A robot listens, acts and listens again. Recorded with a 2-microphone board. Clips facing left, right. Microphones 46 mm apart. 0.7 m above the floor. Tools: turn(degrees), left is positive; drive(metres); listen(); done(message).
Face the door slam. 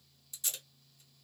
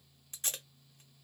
listen()
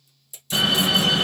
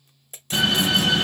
turn(degrees=15)
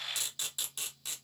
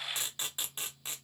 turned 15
listen()
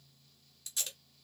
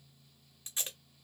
done("I heard a door slam, but can't make it out now. It was about straight ahead or 150° left.")